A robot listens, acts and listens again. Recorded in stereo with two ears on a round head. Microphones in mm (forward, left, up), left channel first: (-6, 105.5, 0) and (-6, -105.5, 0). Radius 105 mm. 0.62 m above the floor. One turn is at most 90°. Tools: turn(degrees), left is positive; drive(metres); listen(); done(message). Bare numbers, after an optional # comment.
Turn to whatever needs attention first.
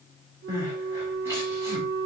turn(-30)
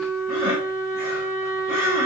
# So it is at 135° right.
turn(-90)
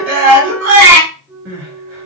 # The crying is now 70° right.
turn(-70)
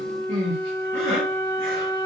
# The crying is now 35° right.
turn(-35)
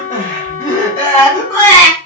# The crying is now 10° left.
turn(10)
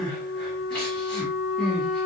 done("Found it: crying, straight ahead, 2 to 4 m away.")